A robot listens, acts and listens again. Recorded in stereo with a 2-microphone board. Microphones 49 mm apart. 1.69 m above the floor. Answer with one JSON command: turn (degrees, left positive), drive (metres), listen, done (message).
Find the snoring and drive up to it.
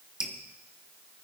{"listen": true}
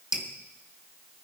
{"listen": true}
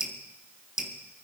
{"done": "I can't make out snoring to turn to."}